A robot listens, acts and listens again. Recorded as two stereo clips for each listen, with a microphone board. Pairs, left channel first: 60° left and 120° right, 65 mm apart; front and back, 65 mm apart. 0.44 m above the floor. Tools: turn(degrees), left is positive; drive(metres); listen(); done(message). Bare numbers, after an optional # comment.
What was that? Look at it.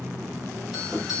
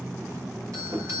# The doorbell: 155° left.
turn(155)
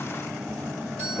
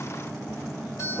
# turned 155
# The doorbell is now 10° right.
turn(-10)
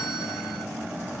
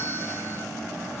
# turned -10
listen()
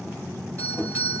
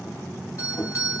done("Facing the doorbell, 2 to 4 m away.")